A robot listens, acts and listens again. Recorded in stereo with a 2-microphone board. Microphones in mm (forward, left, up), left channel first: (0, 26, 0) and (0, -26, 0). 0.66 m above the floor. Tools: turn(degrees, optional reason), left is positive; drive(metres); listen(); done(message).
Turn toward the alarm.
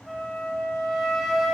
listen()
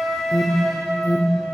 turn(degrees=60, reason="The alarm: about 60° left or 120° left.")
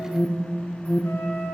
turn(degrees=35, reason="So it is at 35° left.")
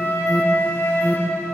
done("Found it: an alarm, straight ahead.")